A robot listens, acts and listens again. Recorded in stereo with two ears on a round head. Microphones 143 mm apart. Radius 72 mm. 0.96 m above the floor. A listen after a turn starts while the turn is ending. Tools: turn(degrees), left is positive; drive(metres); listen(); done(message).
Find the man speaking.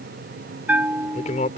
turn(degrees=50)
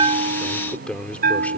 turn(degrees=10)
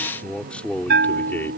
turn(degrees=15)
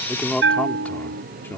turn(degrees=15)
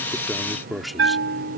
done("Found it: a man speaking, straight ahead.")